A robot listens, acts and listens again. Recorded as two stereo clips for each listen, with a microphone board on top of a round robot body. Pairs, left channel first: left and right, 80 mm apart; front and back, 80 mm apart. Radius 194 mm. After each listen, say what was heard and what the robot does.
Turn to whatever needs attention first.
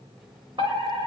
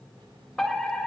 The fire alarm: 85° right. Turn 85° right.
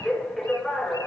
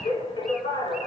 Found it: a fire alarm, straight ahead, over 4 m away.